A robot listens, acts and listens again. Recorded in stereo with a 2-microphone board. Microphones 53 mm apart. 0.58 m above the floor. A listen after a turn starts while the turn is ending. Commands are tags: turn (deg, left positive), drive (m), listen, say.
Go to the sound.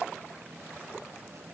<listen/>
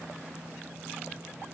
<listen/>
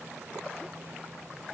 <say>I can't make out anything to turn to.</say>